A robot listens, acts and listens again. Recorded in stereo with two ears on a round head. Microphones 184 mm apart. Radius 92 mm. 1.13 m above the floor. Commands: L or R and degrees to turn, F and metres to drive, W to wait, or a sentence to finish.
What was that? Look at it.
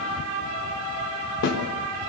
L60
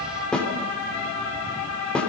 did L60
Found it: a snare drum, straight ahead, 2 to 4 m away.